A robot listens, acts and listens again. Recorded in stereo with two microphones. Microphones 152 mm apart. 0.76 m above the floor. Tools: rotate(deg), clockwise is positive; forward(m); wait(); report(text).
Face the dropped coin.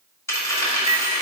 rotate(-20)
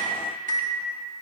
wait()
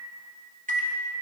report("I heard a dropped coin, but can't make it out now. It was about straight ahead or 140° left.")